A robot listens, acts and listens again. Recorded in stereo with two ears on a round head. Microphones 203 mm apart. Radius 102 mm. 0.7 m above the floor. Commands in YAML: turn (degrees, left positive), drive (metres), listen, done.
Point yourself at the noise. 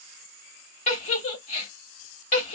turn: 35
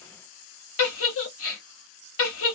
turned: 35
turn: 110
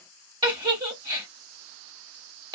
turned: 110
turn: -20
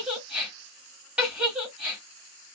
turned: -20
done: "Found it: a giggle, straight ahead, 1 to 2 m away."